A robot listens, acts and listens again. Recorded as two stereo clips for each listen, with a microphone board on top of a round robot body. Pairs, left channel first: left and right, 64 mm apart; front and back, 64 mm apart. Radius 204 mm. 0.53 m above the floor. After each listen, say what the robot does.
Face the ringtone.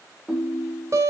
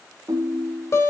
Turn 175° right.
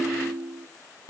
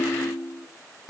Turn 40° right.
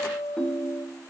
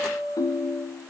Turn 10° left.
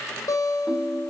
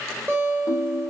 Found it: a ringtone, straight ahead, under 1 m away.